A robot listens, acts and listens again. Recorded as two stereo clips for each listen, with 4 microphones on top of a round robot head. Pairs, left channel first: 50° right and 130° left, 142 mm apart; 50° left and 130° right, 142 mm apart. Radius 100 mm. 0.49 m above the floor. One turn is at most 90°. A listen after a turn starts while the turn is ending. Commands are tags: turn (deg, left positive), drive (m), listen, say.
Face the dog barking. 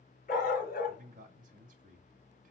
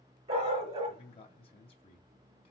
<turn deg="-80"/>
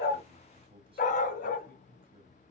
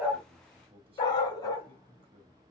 <turn deg="-15"/>
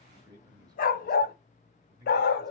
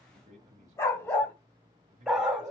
<turn deg="-45"/>
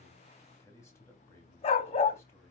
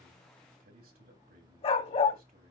<say>Found it: a dog barking, straight ahead.</say>